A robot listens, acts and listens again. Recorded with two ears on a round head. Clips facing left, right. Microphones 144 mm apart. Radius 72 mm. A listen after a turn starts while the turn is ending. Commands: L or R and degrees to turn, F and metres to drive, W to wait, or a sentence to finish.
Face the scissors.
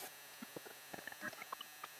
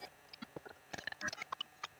W
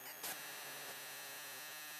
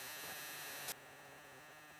W
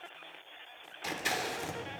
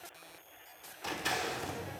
L30
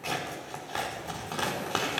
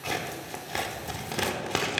R20
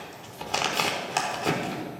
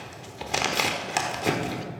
R10
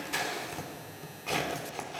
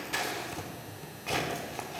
Found it: scissors, straight ahead, 1 to 2 m away.